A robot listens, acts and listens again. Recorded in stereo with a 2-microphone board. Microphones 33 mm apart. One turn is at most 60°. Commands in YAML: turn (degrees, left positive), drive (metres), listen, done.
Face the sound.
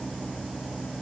listen: true
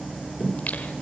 turn: 50
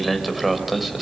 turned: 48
done: "Found it: singing, straight ahead, 2 to 4 m away."